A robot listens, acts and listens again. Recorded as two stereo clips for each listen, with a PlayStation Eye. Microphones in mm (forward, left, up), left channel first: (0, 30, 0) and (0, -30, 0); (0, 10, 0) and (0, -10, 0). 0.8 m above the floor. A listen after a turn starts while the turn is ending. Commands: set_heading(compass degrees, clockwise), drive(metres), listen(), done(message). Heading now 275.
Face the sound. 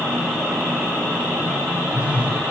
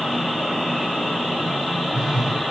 set_heading(295)
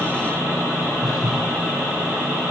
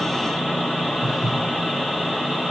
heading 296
done("Found it: a phone buzzing, straight ahead.")